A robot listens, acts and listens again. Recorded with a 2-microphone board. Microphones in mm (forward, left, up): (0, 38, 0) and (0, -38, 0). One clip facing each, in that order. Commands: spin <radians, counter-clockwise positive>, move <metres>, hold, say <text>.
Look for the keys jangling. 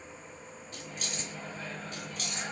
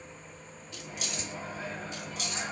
spin 0.87
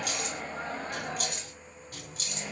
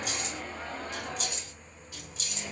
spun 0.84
spin 0.87
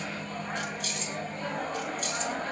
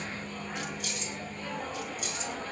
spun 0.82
say Found it: keys jangling, straight ahead, 2 to 4 m away.